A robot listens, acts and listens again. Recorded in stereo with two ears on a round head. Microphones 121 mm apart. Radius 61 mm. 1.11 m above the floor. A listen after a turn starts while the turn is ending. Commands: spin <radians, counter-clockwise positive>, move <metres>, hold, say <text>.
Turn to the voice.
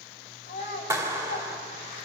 spin 0.96
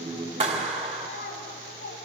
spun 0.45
spin 1.66
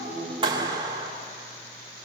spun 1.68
hold
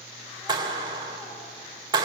hold
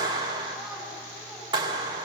say I heard a child speaking from this way, but can't make it out now.